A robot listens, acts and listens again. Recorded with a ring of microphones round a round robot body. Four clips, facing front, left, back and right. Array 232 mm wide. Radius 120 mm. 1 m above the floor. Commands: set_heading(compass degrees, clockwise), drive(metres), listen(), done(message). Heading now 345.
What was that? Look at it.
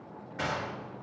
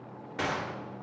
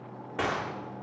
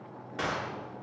set_heading(175)
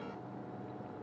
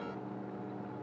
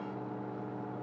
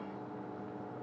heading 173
done("I heard a gunshot from this way, but can't make it out now.")